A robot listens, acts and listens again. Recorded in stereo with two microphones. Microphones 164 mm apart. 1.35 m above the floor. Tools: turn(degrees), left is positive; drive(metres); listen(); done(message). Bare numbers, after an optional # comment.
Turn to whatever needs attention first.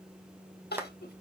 turn(90)
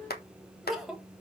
done("Found it: crying, straight ahead.")